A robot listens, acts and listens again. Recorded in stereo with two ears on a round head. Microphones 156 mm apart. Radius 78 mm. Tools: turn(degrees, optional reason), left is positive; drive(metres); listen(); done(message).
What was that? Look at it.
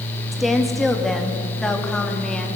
turn(degrees=30)
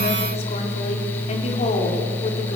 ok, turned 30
turn(degrees=140, reason="So it is at 140° left.")
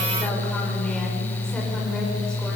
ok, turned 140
listen()
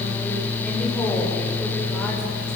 listen()
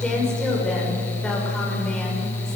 done("Facing where the woman speaking came from. I can't hear it now.")